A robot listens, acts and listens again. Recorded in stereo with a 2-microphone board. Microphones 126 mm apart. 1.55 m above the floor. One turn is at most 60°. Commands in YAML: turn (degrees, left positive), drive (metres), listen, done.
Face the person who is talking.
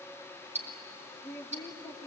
turn: 30
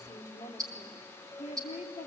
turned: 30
turn: 60
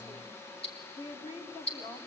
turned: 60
turn: 45
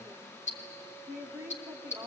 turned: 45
turn: -20
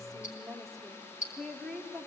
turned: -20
done: "Facing the woman speaking."